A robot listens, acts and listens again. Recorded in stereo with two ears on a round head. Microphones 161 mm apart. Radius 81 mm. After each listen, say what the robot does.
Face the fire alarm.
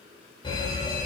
Turn 30° left.
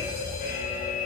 Turn 120° left.
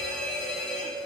Facing the fire alarm, over 4 m away.